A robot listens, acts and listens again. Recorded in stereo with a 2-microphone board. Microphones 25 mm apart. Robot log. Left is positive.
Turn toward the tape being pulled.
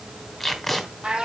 cmd yaw +30
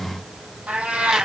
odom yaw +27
cmd idle
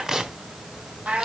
note: So it is at 20° right.
cmd yaw -20
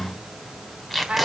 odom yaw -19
end: Facing the tape being pulled, 2 to 4 m away.